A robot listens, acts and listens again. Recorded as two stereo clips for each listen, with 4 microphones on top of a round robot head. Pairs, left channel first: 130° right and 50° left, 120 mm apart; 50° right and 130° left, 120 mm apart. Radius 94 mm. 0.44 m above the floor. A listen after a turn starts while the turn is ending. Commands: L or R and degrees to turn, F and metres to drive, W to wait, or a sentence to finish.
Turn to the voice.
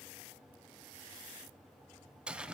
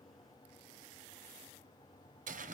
W
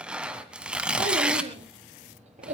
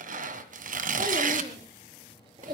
L75
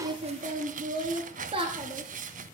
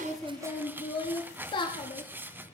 Facing the child speaking.